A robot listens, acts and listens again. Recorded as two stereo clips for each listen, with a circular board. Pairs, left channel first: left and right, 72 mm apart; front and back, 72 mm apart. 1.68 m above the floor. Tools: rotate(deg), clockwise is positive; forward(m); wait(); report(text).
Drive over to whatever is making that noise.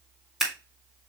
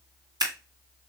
rotate(175)
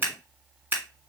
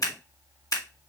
rotate(30)
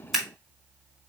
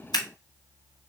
forward(1.0)
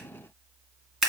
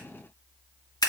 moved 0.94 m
forward(1.0)
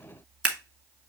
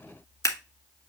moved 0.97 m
rotate(20)
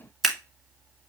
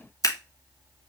forward(1.0)
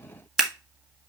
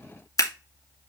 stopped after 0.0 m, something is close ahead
rotate(10)
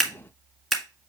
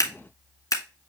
report("I am next to the scissors.")